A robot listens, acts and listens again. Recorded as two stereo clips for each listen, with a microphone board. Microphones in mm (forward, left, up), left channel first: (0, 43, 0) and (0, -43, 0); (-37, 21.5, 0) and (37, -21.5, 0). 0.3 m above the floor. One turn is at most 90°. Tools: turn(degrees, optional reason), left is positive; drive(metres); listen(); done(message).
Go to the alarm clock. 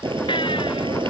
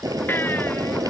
listen()
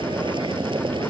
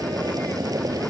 listen()
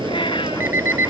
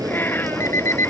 turn(degrees=-90, reason="The alarm clock: 150° right.")
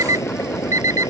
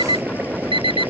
turn(degrees=-40, reason="The alarm clock is now 40° right.")
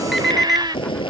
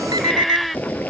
drive(metres=1.0)
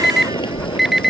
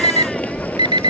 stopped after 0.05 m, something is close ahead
done("Blocked. The alarm clock is further on, straight ahead.")